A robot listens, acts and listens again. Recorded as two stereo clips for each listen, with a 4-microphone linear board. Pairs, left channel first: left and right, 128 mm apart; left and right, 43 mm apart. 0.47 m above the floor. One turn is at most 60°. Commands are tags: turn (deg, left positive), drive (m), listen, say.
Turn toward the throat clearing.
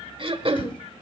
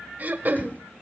<turn deg="-45"/>
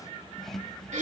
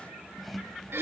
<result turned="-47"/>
<turn deg="-60"/>
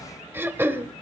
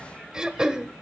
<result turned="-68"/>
<turn deg="-20"/>
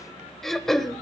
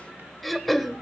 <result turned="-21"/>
<say>Found it: throat clearing, straight ahead, 1 to 2 m away.</say>